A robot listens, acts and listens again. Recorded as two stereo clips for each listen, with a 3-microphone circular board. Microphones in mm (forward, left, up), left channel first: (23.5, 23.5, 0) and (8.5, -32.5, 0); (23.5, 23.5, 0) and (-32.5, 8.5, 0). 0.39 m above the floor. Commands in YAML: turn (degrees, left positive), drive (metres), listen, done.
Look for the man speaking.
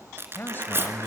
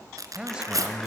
turn: 125
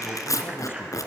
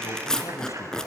listen: true
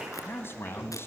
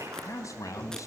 turn: 35
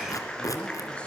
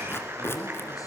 listen: true
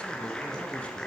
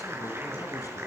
listen: true
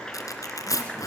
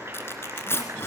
done: "Facing where the man speaking came from. I can't hear it now."